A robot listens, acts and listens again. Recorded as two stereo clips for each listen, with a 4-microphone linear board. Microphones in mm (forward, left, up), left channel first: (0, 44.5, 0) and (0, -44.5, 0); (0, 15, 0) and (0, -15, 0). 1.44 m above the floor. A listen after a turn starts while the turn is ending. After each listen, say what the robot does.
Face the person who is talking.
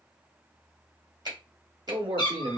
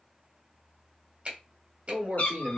Turn 90° right.
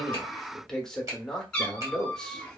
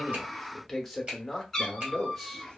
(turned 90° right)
Facing the man speaking.